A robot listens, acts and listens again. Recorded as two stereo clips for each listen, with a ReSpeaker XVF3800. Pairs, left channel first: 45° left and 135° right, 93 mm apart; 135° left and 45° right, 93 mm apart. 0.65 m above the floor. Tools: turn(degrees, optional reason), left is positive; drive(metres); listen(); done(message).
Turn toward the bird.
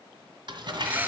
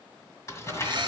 turn(degrees=-65, reason="The bird: 65° right.")
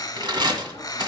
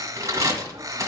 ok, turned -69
done("Facing the bird, 1 to 2 m away.")